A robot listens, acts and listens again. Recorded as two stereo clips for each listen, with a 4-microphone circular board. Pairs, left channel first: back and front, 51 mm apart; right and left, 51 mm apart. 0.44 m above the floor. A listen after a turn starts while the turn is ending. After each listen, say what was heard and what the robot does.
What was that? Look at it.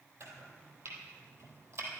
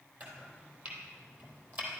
The chopping: 40° left. Turn 40° left.
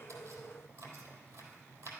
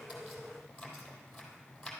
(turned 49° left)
The chopping is now 10° right. Turn 10° right.
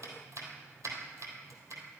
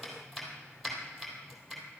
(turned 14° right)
Facing the chopping.